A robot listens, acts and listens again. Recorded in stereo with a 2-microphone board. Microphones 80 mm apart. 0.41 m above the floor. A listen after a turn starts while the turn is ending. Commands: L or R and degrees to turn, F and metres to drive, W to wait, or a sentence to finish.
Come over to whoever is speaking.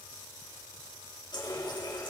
W
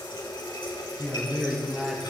R30
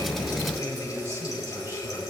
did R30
R140
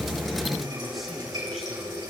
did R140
W
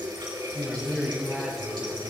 F1.0
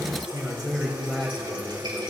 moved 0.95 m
F1.0
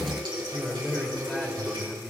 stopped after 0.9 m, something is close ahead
L10
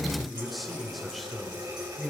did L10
Arrived at the man speaking, straight ahead.